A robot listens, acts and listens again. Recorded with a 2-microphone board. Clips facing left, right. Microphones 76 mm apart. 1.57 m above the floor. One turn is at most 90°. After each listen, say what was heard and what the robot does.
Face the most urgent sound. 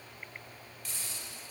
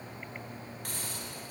Keep listening.
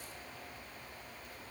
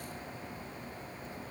Keep listening.
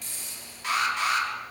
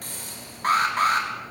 The alarm: about 45° right or 135° right. Turn 45° right.
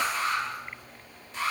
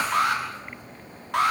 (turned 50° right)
So it is at 85° right. Turn 85° right.
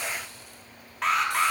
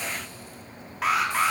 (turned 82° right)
Facing the alarm, over 4 m away.